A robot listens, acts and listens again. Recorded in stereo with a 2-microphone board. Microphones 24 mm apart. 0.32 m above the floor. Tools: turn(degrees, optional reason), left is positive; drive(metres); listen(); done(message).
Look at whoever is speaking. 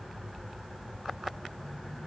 listen()
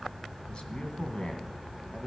turn(degrees=45, reason="The man speaking: about 45° left or 135° left.")
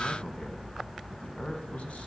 turn(degrees=90, reason="So it is at 90° left.")
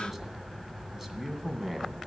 turn(degrees=-15, reason="The man speaking is now 15° right.")
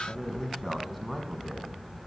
done("Found it: a man speaking, straight ahead.")